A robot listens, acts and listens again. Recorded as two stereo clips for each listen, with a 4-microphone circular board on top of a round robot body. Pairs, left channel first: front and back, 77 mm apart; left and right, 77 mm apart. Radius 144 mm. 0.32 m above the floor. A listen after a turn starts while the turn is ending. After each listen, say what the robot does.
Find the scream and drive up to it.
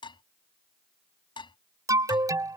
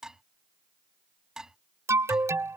Keep listening.
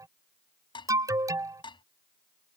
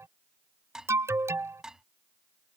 Keep listening.
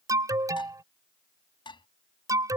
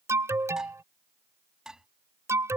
I can't make out a scream to turn to.